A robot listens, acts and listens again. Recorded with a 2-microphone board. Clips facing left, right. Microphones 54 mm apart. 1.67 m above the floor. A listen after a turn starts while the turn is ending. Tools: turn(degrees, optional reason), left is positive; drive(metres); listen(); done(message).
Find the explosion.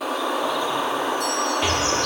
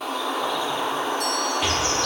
turn(degrees=30)
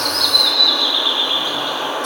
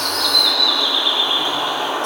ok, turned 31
listen()
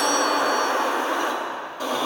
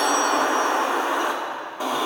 done("I heard an explosion, but can't make it out now. It was about 30° right or 145° left.")